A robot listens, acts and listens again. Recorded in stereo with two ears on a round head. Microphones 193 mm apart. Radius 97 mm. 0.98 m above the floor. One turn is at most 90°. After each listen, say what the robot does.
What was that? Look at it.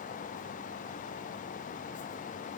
Keep listening.
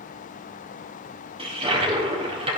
Turn 30° right.
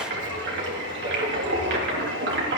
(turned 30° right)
Turn 90° right.
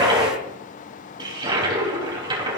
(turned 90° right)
Turn 20° right.
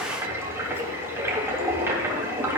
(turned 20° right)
Turn 10° right.
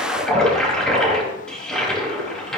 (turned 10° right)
Found it: a toilet flushing, straight ahead.